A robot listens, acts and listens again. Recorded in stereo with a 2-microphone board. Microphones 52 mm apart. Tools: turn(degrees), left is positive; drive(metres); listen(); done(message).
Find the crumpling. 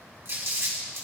turn(degrees=-60)
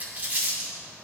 turn(degrees=-35)
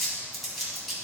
done("Facing the crumpling, 2 to 4 m away.")